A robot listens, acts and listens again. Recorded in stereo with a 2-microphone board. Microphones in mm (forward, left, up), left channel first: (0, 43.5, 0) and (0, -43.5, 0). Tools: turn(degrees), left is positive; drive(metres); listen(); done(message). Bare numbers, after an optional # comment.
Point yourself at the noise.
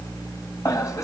# The laughter: about 40° left or 140° left.
turn(40)
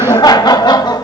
# So it is at 125° left.
turn(125)
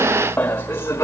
# The laughter is now 30° left.
turn(30)
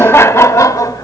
# The laughter is now 40° left.
turn(40)
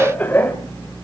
# The laughter is now 25° left.
turn(25)
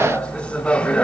# The laughter is now 20° left.
turn(20)
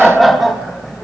done("Found it: laughter, straight ahead.")